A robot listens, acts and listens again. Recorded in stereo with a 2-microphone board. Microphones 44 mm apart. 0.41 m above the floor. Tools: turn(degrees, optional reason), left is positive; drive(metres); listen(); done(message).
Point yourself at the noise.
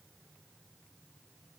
listen()
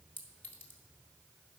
turn(degrees=55, reason="The clink: about 55° left or 125° left.")
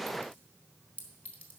turn(degrees=45, reason="So it is at 45° left.")
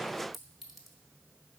done("Found it: a clink, straight ahead.")